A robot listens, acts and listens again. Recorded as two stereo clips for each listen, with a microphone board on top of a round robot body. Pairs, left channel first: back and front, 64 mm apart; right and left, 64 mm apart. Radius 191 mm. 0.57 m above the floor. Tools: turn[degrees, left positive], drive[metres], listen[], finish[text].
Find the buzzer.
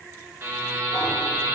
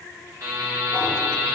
Thought: The buzzer: 55° left.
Action: turn[55]
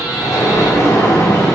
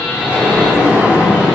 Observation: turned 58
Action: listen[]
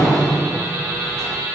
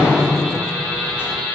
Action: finish[Found it: a buzzer, straight ahead.]